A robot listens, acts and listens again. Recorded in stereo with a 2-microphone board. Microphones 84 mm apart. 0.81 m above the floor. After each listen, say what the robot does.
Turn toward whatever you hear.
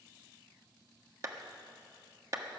Turn 40° right.
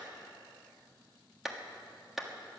Facing the clap.